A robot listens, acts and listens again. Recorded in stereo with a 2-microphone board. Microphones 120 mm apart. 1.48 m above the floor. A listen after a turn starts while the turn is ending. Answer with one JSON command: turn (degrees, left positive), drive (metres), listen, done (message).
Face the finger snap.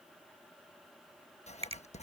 {"turn": -60}
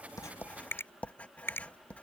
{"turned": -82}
{"turn": 20}
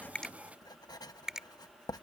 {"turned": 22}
{"done": "Facing the finger snap."}